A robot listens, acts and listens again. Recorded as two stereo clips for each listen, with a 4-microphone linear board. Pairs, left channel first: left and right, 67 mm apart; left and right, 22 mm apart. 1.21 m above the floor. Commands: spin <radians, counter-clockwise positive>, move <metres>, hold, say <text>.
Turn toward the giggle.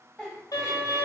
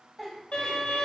spin 0.52
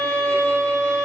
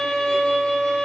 hold
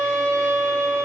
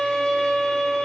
hold
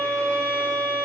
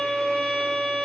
say I heard a giggle, but can't make it out now. It was about 20° right or 140° left.